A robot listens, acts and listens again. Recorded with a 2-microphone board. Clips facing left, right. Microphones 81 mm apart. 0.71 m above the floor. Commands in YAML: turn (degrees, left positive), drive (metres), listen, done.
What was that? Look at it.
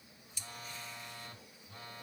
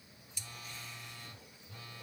turn: 40
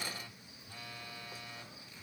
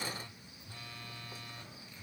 done: "Found it: a phone buzzing, straight ahead."